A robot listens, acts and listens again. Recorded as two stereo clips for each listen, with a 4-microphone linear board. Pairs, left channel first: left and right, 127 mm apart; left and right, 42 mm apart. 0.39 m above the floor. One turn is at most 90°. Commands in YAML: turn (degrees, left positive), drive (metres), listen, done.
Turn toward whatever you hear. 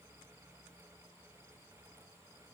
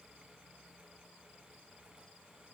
listen: true
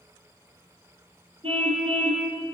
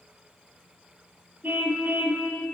turn: -45
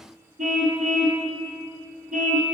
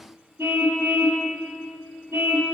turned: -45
turn: -90
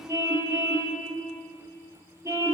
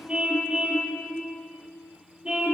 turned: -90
turn: -25
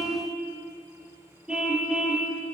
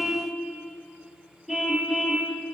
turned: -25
done: "Facing the car horn, over 4 m away."